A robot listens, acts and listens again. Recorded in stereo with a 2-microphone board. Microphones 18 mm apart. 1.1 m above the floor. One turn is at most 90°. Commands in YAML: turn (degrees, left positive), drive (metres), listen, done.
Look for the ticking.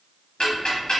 turn: 60
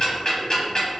turn: 55
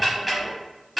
done: "Found it: ticking, straight ahead."